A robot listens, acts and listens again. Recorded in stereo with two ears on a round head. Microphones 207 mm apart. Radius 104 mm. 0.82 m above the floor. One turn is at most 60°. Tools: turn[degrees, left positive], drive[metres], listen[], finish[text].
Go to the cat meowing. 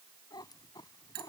Thought: The cat meowing: about 15° left or 165° left.
Action: turn[15]
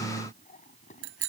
Thought: So it is at 150° left.
Action: turn[60]
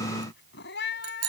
Thought: The cat meowing is now 130° left.
Action: turn[60]
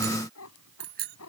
Thought: The cat meowing is now 70° left.
Action: turn[60]
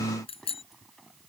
Action: drive[1.0]
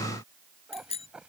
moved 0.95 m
Action: drive[1.0]
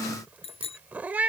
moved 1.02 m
Action: drive[1.0]
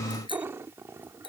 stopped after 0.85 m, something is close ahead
Thought: The cat meowing is now 10° right.
Action: turn[-10]
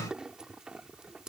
Action: finish[Arrived at the cat meowing, straight ahead.]